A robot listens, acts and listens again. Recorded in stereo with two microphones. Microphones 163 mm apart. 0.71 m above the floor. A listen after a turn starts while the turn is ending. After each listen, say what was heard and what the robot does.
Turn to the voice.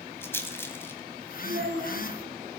The child speaking: about 70° right or 110° right. Turn 70° right.
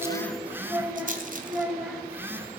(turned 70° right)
Found it: a child speaking, straight ahead.